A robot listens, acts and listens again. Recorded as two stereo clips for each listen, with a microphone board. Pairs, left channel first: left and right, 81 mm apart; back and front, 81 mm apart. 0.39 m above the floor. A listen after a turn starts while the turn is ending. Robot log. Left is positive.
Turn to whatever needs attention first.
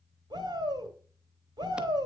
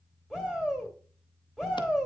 note: The shout: 80° right.
cmd yaw -80
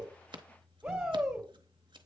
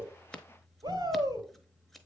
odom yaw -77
end: Facing the shout.